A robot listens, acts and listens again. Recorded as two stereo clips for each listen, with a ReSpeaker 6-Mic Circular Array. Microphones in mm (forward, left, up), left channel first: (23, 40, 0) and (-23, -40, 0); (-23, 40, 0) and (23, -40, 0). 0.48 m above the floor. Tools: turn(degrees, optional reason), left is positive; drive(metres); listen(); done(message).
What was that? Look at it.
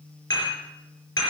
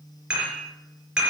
turn(degrees=20, reason="The dishes clattering: 20° left.")
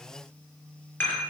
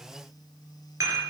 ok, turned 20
done("Found it: dishes clattering, straight ahead.")